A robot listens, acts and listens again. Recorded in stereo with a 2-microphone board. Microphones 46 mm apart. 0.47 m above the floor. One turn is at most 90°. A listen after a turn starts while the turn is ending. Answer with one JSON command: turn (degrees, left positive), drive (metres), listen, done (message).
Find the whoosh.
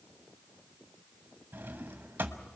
{"listen": true}
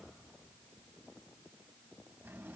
{"listen": true}
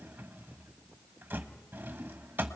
{"done": "I can't make out a whoosh to turn to."}